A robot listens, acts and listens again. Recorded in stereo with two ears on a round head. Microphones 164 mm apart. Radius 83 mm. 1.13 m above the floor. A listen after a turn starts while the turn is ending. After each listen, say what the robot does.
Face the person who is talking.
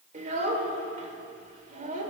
Turn 45° right.
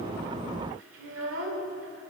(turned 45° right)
Turn 90° right.
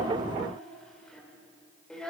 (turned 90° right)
Facing the child speaking, 2 to 4 m away.